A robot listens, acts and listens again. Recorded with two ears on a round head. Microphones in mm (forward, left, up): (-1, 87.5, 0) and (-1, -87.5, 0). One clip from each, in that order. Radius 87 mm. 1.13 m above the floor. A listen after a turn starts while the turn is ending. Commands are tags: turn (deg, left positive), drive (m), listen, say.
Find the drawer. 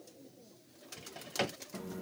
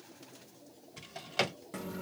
<turn deg="-20"/>
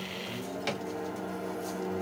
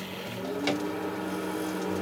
<listen/>
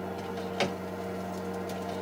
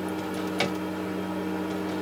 <turn deg="-10"/>
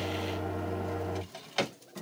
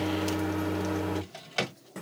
<say>Facing the drawer.</say>